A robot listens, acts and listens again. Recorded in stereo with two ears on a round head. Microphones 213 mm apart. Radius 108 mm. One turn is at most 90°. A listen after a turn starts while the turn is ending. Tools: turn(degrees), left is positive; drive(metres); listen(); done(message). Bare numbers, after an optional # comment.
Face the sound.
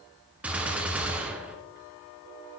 turn(-30)
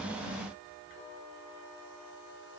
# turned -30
listen()
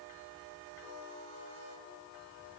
done("I heard a gunshot, but can't make it out now. It was about 25° left or 145° right.")